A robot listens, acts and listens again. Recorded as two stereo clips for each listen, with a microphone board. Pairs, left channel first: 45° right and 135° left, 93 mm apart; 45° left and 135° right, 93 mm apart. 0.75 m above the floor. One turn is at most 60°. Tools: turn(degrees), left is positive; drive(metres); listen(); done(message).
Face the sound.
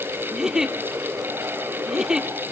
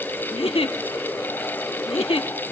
turn(degrees=55)
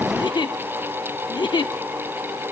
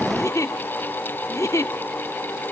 turn(degrees=-10)
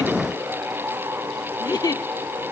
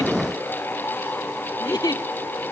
done("Facing the giggle, under 1 m away.")